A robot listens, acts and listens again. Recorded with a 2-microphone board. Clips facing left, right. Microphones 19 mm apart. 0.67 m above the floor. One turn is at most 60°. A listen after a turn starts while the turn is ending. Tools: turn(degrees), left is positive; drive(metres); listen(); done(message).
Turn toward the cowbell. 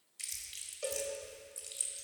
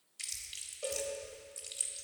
turn(degrees=25)
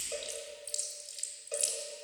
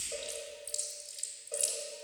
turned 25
turn(degrees=60)
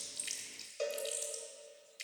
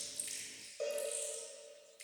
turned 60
turn(degrees=60)
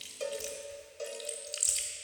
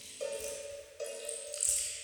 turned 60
turn(degrees=10)
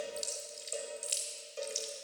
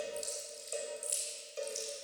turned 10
done("Facing the cowbell, 2 to 4 m away.")